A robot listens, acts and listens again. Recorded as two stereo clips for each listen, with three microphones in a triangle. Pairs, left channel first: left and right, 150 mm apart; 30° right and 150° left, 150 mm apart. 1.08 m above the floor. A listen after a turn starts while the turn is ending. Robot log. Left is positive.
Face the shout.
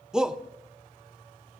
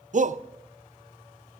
note: The shout: 175° right.
cmd yaw -175
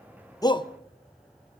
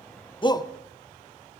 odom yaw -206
note: The shout is now 30° left.
cmd yaw +30
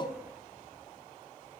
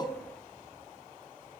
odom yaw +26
cmd idle
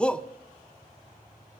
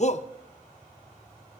end: Facing the shout.